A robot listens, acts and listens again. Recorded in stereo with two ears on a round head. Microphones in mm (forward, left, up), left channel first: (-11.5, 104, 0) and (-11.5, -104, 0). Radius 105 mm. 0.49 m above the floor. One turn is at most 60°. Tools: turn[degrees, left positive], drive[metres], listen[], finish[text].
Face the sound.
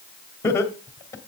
Action: turn[30]
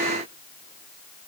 Action: listen[]
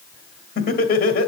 Thought: So it is at 135° left.
Action: turn[60]
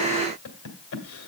Thought: The laughter is now 90° left.
Action: turn[60]
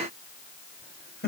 Thought: The laughter is now 45° left.
Action: turn[45]
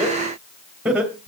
Action: finish[Found it: laughter, straight ahead, 2 to 4 m away.]